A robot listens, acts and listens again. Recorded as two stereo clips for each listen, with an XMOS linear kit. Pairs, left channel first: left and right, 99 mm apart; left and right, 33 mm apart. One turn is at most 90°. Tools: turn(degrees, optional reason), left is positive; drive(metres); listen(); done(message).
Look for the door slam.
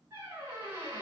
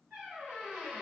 listen()
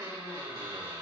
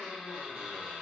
listen()
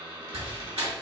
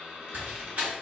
turn(degrees=-70, reason="The door slam: about 70° right or 110° right.")
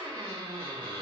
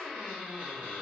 listen()
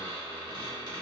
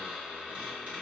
done("I heard a door slam, but can't make it out now. It was about straight ahead or 40° right.")